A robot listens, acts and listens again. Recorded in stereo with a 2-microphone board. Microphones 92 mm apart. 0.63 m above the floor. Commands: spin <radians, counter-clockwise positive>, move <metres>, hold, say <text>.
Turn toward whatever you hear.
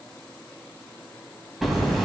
spin 0.52
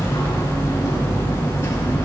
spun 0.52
spin 2.62
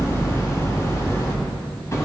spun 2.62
spin 0.61
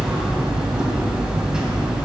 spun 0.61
say Facing the hammering.